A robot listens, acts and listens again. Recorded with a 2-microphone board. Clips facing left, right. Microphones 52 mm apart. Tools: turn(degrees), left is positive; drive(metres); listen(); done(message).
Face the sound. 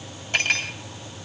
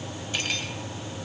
turn(degrees=50)
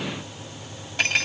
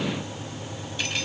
turn(degrees=80)
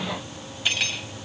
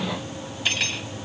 done("Facing the cutlery clinking, 2 to 4 m away.")